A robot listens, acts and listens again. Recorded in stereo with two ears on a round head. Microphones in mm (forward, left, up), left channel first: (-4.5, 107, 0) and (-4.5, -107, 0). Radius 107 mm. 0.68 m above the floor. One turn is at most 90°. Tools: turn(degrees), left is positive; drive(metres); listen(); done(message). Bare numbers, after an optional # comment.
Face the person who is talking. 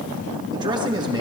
# The man speaking: about 20° right or 160° right.
turn(-20)
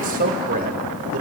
# So it is at 140° right.
turn(-90)
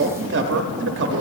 # The man speaking is now 60° right.
turn(-60)
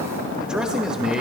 done("Found it: a man speaking, straight ahead.")